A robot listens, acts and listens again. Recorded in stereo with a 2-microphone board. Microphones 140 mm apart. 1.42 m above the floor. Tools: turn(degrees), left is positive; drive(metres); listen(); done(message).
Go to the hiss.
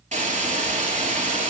turn(degrees=-60)
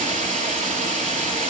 turn(degrees=-60)
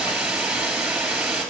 drive(metres=1.0)
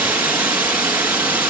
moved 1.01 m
turn(degrees=-15)
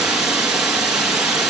drive(metres=1.0)
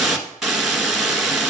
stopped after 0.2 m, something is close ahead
done("Arrived at the hiss, straight ahead.")